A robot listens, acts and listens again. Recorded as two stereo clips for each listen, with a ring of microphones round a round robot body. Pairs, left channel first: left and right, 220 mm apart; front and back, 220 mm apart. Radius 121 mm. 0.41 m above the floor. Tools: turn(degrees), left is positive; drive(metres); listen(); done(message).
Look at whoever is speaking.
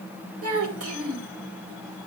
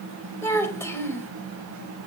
turn(degrees=-80)
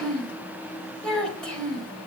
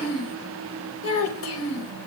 done("Facing the child speaking, 1 to 2 m away.")